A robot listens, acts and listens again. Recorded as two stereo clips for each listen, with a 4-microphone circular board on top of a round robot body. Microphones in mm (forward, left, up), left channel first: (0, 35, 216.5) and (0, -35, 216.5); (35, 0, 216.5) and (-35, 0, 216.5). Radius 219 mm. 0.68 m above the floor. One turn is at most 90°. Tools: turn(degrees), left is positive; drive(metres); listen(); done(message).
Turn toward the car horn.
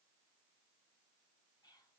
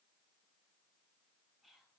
listen()
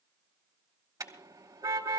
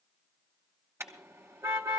turn(degrees=-90)
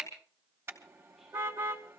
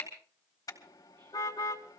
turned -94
turn(degrees=-35)
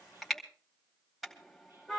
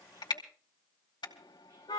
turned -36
done("Found it: a car horn, straight ahead.")